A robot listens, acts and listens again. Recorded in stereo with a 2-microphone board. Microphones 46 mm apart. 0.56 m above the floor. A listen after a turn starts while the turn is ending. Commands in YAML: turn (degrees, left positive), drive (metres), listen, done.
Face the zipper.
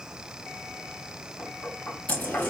turn: 40
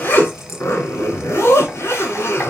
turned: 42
turn: 100
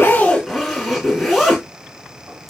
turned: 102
done: "Facing the zipper, 1 to 2 m away."